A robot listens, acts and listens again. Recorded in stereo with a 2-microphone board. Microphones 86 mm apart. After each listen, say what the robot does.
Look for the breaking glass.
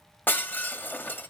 Turn 20° left.
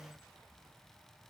Keep listening.
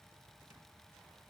I heard breaking glass, but can't make it out now. It was about straight ahead or 140° left.